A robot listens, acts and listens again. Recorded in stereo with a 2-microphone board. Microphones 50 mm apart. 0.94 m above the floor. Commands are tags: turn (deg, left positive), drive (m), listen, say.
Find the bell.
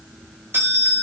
<turn deg="-50"/>
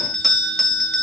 <say>Facing the bell.</say>